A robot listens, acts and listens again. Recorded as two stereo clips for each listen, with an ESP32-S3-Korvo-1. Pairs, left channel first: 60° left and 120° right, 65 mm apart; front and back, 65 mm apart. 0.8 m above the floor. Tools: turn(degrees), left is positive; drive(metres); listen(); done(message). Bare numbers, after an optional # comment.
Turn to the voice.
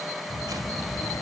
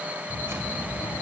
# The child speaking: 30° left.
turn(30)
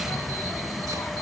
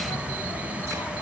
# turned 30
# The child speaking is now 10° left.
turn(10)
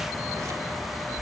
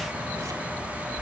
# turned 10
done("Found it: a child speaking, straight ahead.")